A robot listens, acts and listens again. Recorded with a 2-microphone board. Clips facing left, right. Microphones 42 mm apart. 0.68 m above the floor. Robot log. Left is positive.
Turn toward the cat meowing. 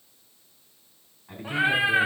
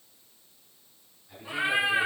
note: The cat meowing: about 40° left or 140° left.
cmd yaw +40
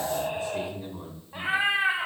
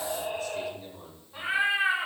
note: So it is at 115° left.
cmd yaw +115
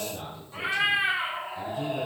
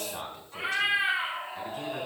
end: Facing the cat meowing.